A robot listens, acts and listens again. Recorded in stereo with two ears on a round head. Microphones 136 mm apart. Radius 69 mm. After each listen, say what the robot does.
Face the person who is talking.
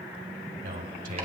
Turn 55° right.
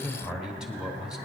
Facing the man speaking, 2 to 4 m away.